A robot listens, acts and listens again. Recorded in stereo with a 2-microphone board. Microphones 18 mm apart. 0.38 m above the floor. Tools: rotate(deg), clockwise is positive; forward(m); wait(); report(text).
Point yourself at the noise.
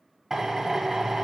rotate(30)
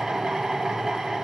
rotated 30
rotate(120)
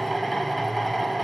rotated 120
report("Found it: a drill, straight ahead.")